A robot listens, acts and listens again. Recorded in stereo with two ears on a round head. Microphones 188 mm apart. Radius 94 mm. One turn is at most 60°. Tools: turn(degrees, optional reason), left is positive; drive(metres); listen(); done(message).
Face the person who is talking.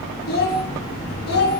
turn(degrees=50, reason="The child speaking: about 50° left or 130° left.")
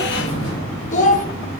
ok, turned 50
turn(degrees=40, reason="So it is at 40° left.")
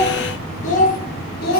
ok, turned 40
turn(degrees=50, reason="The child speaking is now 50° left.")
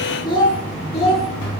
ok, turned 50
turn(degrees=30, reason="The child speaking is now 30° left.")
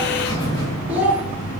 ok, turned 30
done("Found it: a child speaking, straight ahead, 2 to 4 m away.")